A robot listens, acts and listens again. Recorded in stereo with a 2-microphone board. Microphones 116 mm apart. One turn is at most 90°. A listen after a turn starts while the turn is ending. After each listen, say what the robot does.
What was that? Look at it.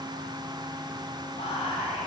Turn 60° left.
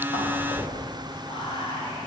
Turn 50° left.
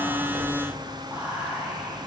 Turn 15° right.
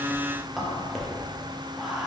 Facing the whispering, under 1 m away.